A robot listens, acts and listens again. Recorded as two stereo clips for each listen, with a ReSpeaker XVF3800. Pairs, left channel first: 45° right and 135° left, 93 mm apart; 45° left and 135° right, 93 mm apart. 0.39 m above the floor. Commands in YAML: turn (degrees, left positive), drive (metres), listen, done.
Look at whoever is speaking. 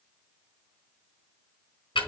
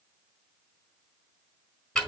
listen: true
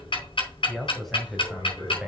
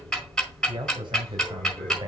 turn: -145
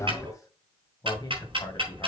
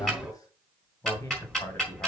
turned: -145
turn: -10
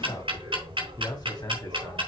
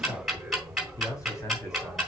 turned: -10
done: "Facing the man speaking."